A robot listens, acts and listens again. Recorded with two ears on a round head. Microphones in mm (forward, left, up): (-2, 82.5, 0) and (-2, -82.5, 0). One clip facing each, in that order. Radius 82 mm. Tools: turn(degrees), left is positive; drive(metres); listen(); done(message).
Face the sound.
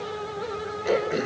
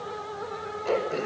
turn(degrees=30)
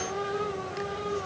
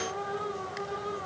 listen()
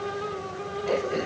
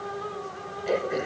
turn(degrees=-15)
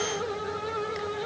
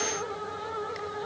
listen()
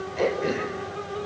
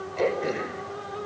done("Found it: throat clearing, straight ahead.")